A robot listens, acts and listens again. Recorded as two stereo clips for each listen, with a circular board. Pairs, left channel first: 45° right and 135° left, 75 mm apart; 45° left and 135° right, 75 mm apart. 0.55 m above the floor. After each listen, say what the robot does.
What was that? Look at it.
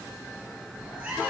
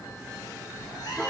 Turn 70° left.
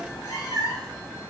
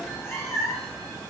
Facing the cat meowing.